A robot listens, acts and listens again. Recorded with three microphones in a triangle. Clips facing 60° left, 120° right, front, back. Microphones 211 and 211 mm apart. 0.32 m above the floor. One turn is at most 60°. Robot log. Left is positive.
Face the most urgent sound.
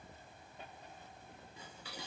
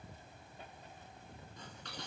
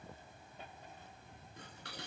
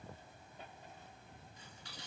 cmd idle
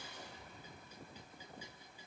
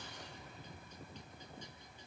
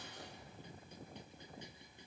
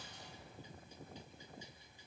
cmd idle
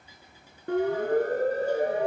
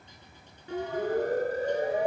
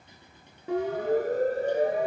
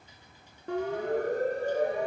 note: The siren: 85° left.
cmd yaw +60
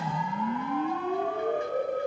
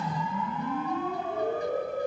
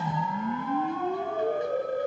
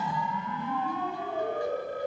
note: The siren is now 40° left.
cmd yaw +40
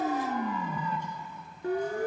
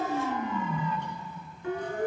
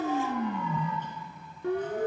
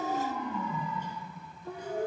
note: The siren is now 10° left.
cmd yaw +10
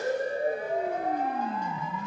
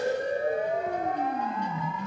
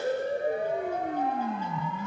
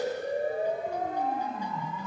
end: Found it: a siren, straight ahead.